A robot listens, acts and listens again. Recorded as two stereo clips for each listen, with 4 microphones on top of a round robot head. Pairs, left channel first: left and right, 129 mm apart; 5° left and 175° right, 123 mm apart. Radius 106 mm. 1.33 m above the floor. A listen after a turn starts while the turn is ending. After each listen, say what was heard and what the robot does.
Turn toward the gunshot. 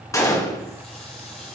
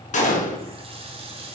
The gunshot: 25° left. Turn 25° left.
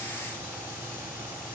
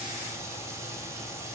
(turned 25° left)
I heard a gunshot from this way, but can't make it out now.